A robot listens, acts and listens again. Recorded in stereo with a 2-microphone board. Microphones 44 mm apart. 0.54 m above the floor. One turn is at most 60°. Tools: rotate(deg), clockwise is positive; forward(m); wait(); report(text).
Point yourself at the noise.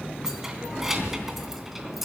rotate(30)
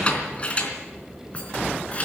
rotate(-30)
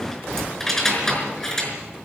rotate(-10)
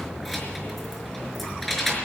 report("Found it: keys jangling, straight ahead, over 4 m away.")